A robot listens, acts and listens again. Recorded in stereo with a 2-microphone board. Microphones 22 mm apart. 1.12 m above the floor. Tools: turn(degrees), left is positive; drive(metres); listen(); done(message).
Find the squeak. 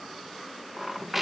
turn(degrees=-30)
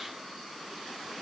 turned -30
listen()
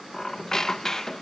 turn(degrees=25)
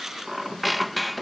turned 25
done("Found it: a squeak, straight ahead.")